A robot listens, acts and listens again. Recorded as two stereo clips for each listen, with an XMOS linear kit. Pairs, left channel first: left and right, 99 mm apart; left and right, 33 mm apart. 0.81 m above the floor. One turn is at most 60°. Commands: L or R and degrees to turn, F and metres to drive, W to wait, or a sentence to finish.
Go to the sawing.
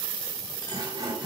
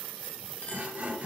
R50
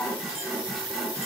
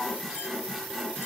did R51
F1.0
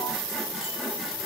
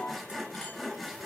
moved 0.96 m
F1.0
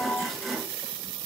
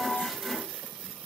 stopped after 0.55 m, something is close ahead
Arrived at the sawing, straight ahead.